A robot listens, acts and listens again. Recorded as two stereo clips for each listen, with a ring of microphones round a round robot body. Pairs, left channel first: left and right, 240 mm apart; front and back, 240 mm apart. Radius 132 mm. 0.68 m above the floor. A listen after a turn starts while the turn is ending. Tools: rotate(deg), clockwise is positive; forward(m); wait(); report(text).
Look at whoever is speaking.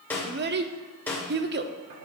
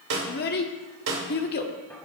rotate(50)
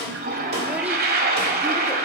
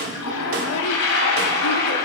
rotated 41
rotate(10)
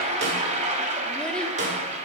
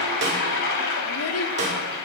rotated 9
wait()
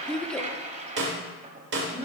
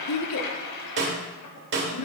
report("Found it: a child speaking, straight ahead, 1 to 2 m away.")